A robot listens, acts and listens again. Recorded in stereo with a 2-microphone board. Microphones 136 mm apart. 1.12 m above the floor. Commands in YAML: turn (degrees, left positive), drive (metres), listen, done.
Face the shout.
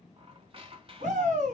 turn: -65
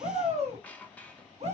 turn: -55
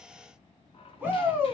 turn: -15
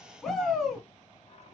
done: "Facing the shout."